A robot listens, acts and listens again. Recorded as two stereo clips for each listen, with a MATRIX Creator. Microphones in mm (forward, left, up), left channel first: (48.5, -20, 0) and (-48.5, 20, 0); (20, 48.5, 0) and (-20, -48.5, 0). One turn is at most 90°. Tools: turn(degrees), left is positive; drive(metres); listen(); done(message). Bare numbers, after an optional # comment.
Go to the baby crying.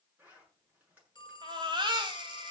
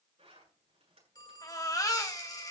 # The baby crying: 120° left.
turn(90)
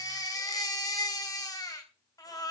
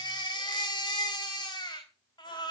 # The baby crying is now 25° left.
turn(25)
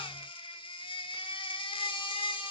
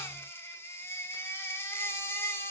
drive(1.0)
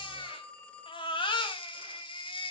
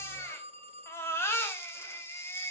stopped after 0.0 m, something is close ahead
done("Something is in my way. I am facing the baby crying but have not reached it.")